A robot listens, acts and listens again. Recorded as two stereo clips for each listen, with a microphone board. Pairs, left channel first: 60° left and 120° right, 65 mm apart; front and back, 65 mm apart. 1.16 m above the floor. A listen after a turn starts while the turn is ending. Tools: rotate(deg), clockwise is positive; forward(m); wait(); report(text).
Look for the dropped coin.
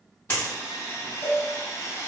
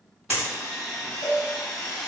rotate(-125)
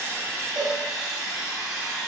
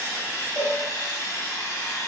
report("Facing where the dropped coin came from. I can't hear it now.")